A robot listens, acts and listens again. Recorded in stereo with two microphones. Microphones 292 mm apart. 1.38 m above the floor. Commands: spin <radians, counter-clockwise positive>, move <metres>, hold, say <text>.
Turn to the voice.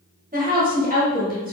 spin -0.52
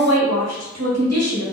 spin -2.09
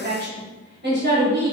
spin -0.61
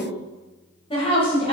spin 0.35
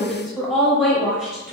say Facing the woman speaking.